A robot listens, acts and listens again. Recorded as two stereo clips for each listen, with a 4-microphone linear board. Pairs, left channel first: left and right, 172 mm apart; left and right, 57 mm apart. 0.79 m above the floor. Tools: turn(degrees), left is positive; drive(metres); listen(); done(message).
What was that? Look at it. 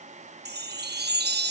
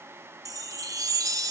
turn(degrees=-90)
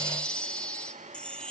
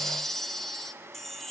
done("Found it: a chime, straight ahead.")